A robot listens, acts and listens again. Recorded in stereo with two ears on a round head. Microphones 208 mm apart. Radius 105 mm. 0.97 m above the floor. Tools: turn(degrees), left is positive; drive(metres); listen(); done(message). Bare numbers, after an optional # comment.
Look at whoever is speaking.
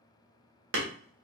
listen()
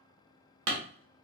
listen()
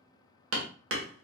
done("I can't make out anyone speaking to turn to.")